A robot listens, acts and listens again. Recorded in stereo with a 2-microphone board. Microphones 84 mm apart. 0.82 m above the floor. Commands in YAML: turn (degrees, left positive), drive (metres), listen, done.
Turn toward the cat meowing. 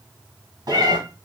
turn: -45
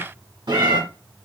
turn: -80
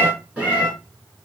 turn: -20
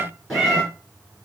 done: "Found it: a cat meowing, straight ahead."